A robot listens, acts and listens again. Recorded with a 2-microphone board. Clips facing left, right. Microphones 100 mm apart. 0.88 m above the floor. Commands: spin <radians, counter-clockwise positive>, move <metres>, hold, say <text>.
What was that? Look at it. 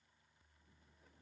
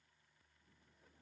hold
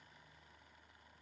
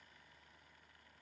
hold
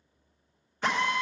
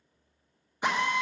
spin -0.26
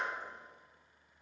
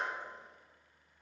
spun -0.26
hold
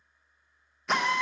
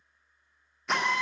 say Found it: a drill, straight ahead, 1 to 2 m away.